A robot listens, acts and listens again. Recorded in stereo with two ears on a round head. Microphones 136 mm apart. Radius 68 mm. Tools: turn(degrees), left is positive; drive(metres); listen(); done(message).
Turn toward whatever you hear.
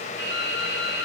turn(degrees=30)
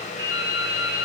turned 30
turn(degrees=-15)
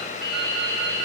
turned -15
done("Facing the dripping.")